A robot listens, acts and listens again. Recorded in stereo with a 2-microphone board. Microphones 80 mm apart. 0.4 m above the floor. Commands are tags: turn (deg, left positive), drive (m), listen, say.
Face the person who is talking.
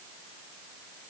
<listen/>
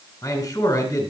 <turn deg="40"/>
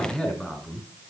<say>Facing the man speaking, over 4 m away.</say>